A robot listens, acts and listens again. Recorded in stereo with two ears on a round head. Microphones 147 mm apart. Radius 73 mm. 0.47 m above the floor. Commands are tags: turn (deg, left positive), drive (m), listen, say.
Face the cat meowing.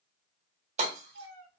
<turn deg="-75"/>
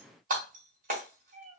<turn deg="-60"/>
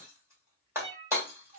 <turn deg="-50"/>
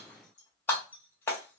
<listen/>
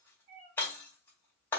<turn deg="-45"/>
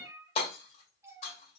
<turn deg="-15"/>
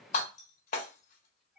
<say>Facing the cat meowing, 1 to 2 m away.</say>